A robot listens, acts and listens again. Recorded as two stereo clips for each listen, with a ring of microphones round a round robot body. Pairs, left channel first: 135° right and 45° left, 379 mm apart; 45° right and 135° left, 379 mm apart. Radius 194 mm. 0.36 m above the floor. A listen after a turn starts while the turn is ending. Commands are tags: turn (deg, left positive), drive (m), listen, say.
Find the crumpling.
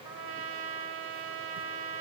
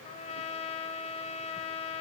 <listen/>
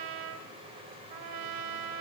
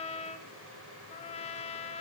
<listen/>
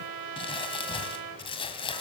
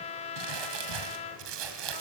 <turn deg="150"/>
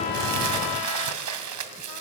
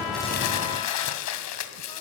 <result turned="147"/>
<say>Found it: crumpling, straight ahead, 2 to 4 m away.</say>